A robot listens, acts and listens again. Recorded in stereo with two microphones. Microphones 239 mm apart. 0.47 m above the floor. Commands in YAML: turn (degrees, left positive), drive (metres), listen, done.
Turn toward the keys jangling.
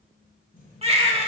turn: 40
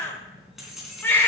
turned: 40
done: "Found it: keys jangling, straight ahead, 2 to 4 m away."